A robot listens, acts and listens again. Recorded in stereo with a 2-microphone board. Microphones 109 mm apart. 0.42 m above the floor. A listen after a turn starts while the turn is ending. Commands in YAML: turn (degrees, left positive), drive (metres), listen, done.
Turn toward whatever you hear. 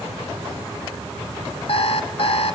turn: 60
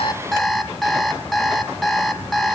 done: "Facing the alarm clock, 1 to 2 m away."